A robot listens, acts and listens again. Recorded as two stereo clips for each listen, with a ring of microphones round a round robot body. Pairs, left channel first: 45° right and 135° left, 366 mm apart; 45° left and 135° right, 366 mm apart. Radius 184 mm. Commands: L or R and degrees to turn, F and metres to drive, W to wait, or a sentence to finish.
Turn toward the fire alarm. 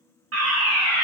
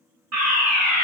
R175
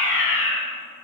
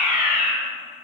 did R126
R50
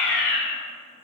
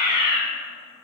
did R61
L10
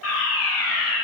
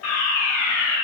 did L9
Found it: a fire alarm, straight ahead.